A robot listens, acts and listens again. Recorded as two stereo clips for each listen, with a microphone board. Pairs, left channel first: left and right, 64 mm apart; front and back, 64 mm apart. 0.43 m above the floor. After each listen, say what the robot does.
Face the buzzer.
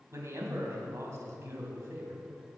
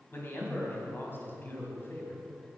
Keep listening.
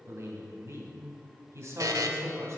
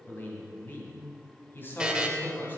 Turn 105° right.
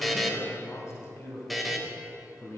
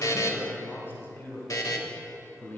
Found it: a buzzer, straight ahead.